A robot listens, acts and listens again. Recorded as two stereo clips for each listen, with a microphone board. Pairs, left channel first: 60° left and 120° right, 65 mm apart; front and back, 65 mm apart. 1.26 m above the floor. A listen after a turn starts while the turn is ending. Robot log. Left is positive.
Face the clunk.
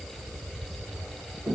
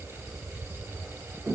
cmd idle
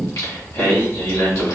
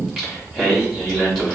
cmd idle
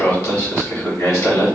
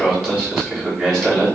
end: I can't make out a clunk to turn to.